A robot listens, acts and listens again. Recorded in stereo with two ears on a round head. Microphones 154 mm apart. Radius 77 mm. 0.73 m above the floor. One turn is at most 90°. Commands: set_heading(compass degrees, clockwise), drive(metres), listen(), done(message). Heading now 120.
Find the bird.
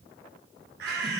set_heading(210)
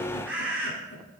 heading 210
set_heading(220)
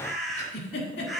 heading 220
done("Facing the bird, 2 to 4 m away.")